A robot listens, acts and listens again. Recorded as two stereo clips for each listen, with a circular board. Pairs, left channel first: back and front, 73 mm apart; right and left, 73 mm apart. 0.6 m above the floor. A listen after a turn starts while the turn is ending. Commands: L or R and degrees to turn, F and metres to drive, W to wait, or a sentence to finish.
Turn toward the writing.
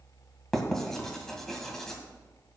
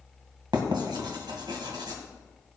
L95
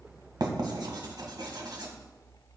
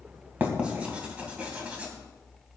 L20
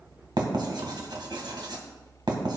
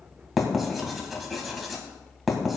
Found it: writing, straight ahead, 1 to 2 m away.